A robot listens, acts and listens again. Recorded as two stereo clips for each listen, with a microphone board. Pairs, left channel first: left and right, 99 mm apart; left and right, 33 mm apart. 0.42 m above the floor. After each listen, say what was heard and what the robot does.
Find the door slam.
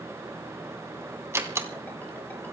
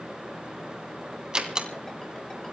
The door slam: about 25° right or 155° right. Turn 25° right.
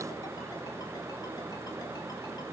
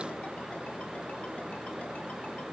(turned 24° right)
Keep listening.
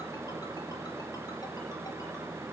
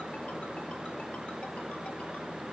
I heard a door slam, but can't make it out now. It was about 5° right or 130° right.